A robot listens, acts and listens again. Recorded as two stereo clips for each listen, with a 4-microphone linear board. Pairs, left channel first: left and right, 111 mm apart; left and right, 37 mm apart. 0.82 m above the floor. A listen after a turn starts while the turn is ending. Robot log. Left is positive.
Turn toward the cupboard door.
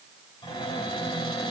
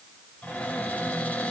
note: The cupboard door: about 45° left or 135° left.
cmd yaw +45
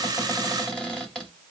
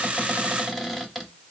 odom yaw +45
end: Found it: a cupboard door, straight ahead.